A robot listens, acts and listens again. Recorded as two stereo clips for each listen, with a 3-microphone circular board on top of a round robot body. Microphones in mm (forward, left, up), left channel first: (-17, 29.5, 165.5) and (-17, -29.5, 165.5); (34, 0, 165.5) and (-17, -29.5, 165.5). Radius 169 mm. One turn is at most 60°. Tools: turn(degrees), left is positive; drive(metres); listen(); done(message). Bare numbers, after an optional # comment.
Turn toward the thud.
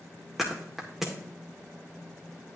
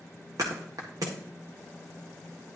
# The thud: 175° right.
turn(-60)
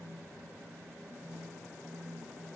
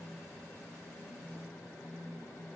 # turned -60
# Nothing new. It was at 115° right.
turn(-60)
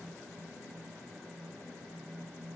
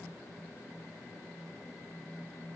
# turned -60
# Nothing new. It was at 55° right.
turn(-55)
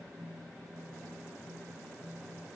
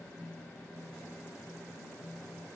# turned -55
done("I heard a thud from this way, but can't make it out now.")